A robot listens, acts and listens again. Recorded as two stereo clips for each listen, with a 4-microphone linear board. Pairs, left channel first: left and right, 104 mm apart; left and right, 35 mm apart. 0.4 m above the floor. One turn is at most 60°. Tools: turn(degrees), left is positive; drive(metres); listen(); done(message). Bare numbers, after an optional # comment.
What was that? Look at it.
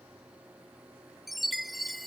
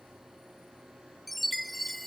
turn(30)
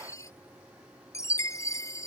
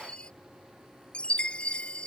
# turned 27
# So it is at 155° left.
turn(60)
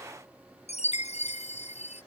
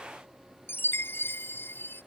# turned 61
# The chime is now 95° left.
turn(60)
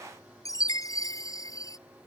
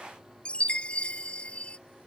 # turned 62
# The chime is now 30° left.
turn(30)
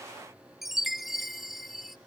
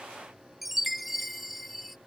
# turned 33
done("Found it: a chime, straight ahead.")